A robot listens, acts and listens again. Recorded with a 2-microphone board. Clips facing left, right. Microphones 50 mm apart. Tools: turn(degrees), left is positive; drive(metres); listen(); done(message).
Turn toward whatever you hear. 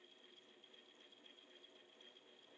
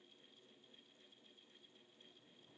listen()
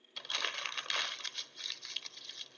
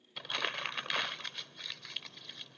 turn(degrees=-30)
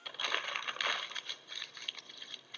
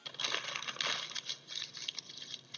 turn(degrees=20)
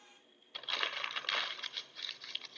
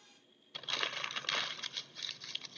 done("Facing the crumpling.")